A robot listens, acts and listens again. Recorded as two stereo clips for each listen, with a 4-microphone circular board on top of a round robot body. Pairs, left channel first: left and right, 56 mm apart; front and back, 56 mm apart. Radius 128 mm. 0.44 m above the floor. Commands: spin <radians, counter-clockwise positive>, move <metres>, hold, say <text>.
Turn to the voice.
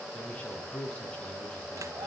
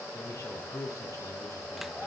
spin 0.35
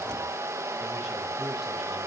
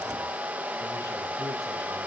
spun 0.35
hold
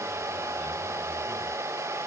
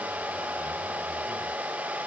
hold
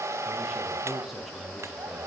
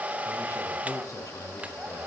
say I heard a man speaking from this way, but can't make it out now.